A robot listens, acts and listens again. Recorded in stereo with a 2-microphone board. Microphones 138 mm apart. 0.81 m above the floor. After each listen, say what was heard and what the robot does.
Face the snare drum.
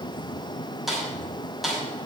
Turn 30° left.
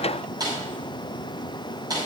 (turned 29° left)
So it is at 30° right. Turn 30° right.
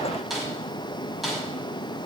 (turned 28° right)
Facing the snare drum, over 4 m away.